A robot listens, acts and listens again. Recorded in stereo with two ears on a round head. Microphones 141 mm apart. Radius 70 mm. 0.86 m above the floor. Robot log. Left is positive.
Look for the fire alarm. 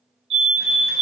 note: The fire alarm: about 40° right or 140° right.
cmd yaw -40
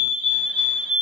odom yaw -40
end: Facing the fire alarm.